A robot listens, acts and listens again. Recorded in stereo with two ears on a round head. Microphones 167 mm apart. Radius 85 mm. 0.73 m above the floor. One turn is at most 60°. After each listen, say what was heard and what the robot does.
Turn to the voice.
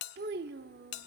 The child speaking: about 55° right or 125° right. Turn 55° right.
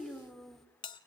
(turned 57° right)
Found it: a child speaking, straight ahead.